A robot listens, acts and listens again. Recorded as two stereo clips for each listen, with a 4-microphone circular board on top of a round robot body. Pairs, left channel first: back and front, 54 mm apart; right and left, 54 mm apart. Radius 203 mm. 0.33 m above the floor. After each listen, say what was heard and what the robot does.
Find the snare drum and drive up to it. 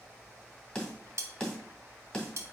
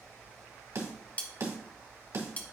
The snare drum: 100° left. Turn 100° left.
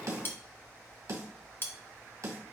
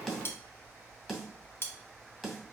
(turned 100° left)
Drive 1.0 m forward.
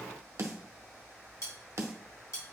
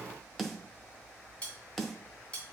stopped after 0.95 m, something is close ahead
I am next to the snare drum.